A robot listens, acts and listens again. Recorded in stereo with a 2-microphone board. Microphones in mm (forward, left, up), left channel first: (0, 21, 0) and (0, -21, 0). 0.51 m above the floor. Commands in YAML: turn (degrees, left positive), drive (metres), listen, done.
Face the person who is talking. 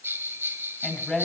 turn: 30
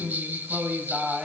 turn: -20
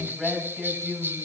done: "Found it: a woman speaking, straight ahead."